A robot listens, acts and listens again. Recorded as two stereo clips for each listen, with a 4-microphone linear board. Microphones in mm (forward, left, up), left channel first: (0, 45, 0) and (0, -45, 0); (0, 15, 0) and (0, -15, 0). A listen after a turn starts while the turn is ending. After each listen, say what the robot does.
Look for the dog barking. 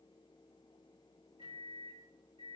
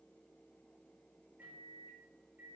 Keep listening.
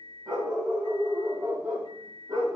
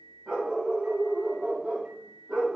Turn 35° right.
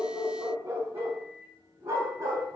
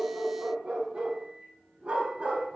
Turn 40° right.
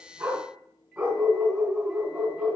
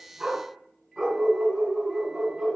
Facing the dog barking, 2 to 4 m away.